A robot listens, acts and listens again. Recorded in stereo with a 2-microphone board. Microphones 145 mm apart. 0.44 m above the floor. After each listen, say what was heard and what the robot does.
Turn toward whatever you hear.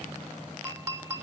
The clink: about 20° right or 160° right. Turn 20° right.
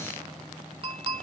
So it is at 140° right. Turn 140° right.
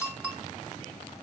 The clink is now 10° right. Turn 10° right.
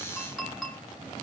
Found it: a clink, straight ahead, 2 to 4 m away.